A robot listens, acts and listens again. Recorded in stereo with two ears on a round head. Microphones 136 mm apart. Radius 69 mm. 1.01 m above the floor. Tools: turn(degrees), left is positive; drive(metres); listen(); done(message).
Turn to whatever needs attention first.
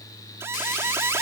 turn(degrees=-15)
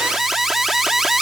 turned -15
done("Facing the alarm.")